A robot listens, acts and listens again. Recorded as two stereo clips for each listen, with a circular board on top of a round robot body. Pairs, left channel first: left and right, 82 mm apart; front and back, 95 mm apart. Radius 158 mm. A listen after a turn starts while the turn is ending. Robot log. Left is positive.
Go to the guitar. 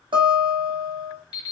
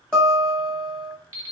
note: The guitar: 85° right.
cmd yaw -85
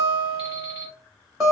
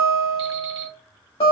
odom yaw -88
cmd fwd 1.0
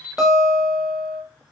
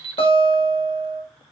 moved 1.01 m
cmd fwd 1.0
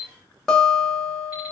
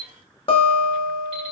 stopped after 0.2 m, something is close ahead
end: I am next to the guitar.